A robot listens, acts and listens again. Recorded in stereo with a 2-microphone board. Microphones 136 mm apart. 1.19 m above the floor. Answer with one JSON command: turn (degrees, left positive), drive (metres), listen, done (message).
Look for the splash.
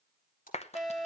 {"turn": 90}
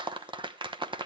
{"done": "I heard a splash from this way, but can't make it out now."}